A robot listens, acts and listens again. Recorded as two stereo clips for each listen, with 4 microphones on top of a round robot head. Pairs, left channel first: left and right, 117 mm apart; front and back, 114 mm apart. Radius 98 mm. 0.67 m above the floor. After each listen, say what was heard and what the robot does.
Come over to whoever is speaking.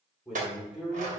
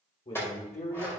Drive 1.0 m forward.
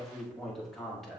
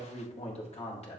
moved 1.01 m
Drive 1.0 m forward.
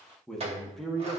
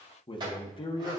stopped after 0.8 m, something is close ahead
I am next to the man speaking.